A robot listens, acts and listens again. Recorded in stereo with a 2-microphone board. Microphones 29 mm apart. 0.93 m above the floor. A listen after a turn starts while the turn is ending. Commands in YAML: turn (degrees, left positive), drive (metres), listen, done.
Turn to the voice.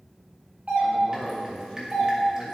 turn: 35
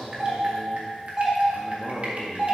turn: 110
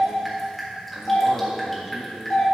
listen: true
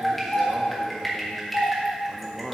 turn: -20
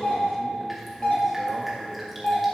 listen: true
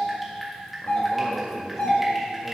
done: "Found it: a man speaking, straight ahead."